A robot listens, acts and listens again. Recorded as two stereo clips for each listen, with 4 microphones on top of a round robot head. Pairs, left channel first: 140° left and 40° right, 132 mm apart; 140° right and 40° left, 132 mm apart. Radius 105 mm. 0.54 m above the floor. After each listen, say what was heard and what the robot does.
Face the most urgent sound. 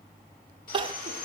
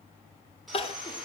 The crying: 95° right. Turn 95° right.
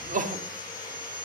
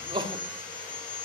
The crying is now 15° right. Turn 15° right.
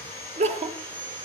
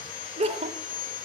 Found it: crying, straight ahead, 1 to 2 m away.